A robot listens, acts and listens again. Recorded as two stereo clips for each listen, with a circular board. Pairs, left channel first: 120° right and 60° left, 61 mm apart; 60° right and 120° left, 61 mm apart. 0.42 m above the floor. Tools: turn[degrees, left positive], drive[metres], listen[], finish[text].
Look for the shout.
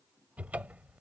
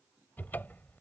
Action: listen[]
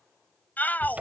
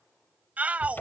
Thought: The shout: 175° right.
Action: turn[-175]
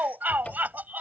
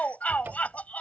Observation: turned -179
Action: finish[Facing the shout.]